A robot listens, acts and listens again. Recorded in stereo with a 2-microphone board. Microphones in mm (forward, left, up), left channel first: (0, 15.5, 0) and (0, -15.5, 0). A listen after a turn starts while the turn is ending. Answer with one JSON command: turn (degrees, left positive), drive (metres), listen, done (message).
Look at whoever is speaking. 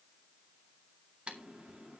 {"listen": true}
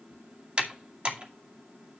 {"listen": true}
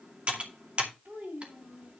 {"turn": -90}
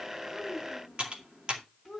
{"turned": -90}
{"done": "Found it: a child speaking, straight ahead, over 4 m away."}